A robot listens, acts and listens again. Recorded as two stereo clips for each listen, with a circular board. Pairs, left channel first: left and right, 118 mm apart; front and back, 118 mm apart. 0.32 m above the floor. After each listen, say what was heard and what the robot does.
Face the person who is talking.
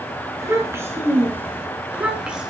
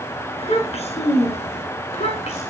Found it: a child speaking, straight ahead.